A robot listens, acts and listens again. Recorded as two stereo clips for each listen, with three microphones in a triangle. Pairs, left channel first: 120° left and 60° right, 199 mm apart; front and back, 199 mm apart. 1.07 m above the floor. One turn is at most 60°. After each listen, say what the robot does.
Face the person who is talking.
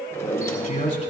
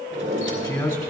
Turn 60° left.
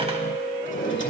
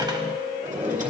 Keep listening.
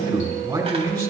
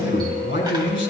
Found it: a man speaking, straight ahead.